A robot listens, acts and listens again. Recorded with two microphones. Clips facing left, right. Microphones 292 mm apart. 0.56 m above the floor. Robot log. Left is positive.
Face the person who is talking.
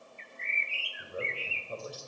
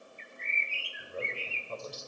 cmd yaw +30
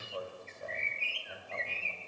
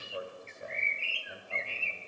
note: So it is at 15° right.
cmd yaw -15
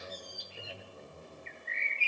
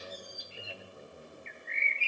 end: Found it: a man speaking, straight ahead.